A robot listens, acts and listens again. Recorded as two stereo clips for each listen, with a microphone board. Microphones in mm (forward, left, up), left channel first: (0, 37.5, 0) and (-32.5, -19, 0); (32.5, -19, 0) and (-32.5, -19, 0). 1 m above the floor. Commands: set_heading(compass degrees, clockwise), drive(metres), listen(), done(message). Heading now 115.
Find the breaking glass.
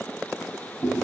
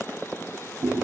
listen()
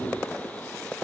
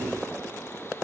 listen()
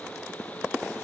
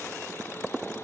done("I can't make out breaking glass, only chewing.")